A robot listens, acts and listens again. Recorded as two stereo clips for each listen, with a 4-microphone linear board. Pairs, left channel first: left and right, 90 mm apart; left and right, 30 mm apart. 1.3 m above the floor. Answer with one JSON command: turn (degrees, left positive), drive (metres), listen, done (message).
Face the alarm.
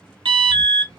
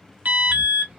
{"turn": -70}
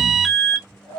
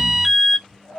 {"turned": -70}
{"done": "Facing the alarm, under 1 m away."}